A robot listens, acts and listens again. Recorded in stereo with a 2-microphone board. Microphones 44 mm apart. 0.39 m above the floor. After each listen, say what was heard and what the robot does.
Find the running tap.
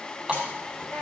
The running tap: about 15° right or 165° right. Turn 15° right.
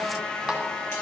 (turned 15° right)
Keep listening.
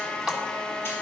Found it: a running tap, straight ahead.